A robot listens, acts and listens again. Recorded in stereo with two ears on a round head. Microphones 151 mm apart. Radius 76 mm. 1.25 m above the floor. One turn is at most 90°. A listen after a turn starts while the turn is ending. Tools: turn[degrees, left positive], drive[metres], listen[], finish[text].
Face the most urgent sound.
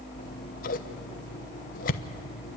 Action: listen[]
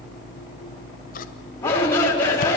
Action: turn[30]
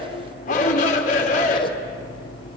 Thought: So it is at 135° left.
Action: turn[90]
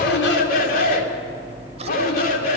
Thought: The shout is now 55° left.
Action: turn[55]
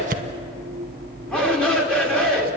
Action: finish[Facing the shout, 2 to 4 m away.]